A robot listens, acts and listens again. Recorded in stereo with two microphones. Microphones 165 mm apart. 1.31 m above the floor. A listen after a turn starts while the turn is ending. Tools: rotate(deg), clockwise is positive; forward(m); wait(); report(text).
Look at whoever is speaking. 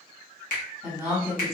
rotate(20)
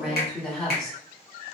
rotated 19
report("Facing the woman speaking, 1 to 2 m away.")